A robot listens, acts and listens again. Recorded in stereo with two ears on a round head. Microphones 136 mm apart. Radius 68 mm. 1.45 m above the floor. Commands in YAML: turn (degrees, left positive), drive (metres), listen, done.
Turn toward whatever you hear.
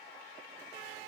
listen: true
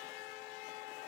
listen: true
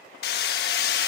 turn: 75
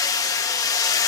turn: 25
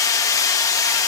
turn: 25
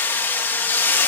turn: 15
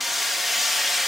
done: "Facing the hammering."